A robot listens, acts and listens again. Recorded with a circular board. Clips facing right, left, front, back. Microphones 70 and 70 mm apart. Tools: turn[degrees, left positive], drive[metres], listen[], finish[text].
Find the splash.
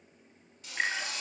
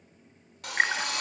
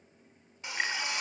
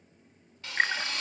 Thought: The splash: 135° left.
Action: turn[135]
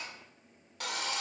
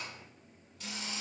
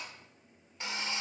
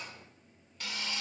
Action: finish[Facing where the splash came from. I can't hear it now.]